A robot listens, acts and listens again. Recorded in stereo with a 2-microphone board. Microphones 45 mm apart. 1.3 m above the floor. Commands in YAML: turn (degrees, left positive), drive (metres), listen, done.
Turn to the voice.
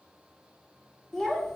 turn: 30
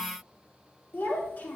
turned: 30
turn: 135
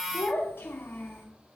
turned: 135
turn: 55
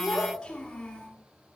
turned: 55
turn: 15
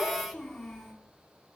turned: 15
done: "Found it: a child speaking, straight ahead."